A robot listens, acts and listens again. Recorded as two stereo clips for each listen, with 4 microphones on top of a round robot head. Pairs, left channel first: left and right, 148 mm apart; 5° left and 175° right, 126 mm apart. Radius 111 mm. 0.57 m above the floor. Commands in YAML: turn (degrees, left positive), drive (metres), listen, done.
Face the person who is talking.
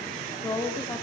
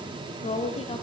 turn: 30
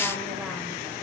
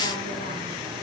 listen: true
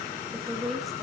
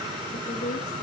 done: "Found it: a woman speaking, straight ahead, 2 to 4 m away."